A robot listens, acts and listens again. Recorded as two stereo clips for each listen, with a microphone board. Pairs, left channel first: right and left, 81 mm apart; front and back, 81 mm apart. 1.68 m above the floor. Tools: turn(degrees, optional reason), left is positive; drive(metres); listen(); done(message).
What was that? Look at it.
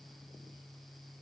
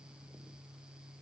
listen()
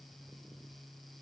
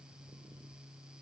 listen()
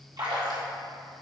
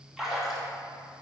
turn(degrees=95, reason="The splash: 95° left.")
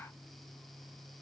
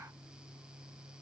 done("Facing where the splash came from. I can't hear it now.")